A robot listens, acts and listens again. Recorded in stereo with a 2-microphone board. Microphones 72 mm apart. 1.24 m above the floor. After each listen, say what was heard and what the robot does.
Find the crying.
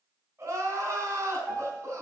The crying: about 40° right or 140° right. Turn 40° right.
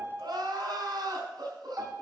So it is at 100° right. Turn 100° right.
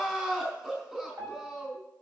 The crying is now 10° right. Turn 10° right.
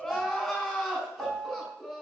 Found it: crying, straight ahead, 2 to 4 m away.